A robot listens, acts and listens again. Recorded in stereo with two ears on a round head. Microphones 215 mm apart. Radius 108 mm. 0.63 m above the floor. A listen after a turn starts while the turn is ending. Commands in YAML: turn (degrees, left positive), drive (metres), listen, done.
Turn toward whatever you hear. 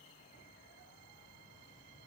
listen: true
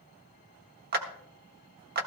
turn: -40
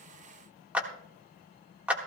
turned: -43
done: "Facing the clap."